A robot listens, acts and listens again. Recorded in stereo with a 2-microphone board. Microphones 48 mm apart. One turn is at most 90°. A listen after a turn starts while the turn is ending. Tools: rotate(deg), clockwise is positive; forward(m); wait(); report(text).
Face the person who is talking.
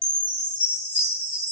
wait()
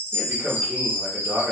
rotate(55)
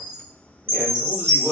rotate(30)
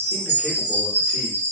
wait()
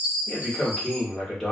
rotate(-10)
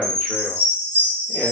wait()
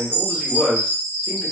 report("Found it: a man speaking, straight ahead, 1 to 2 m away.")